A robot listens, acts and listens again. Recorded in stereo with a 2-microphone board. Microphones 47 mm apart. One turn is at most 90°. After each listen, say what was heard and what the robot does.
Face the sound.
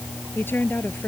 The woman speaking: about 50° left or 130° left. Turn 50° left.
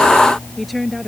Found it: a woman speaking, straight ahead.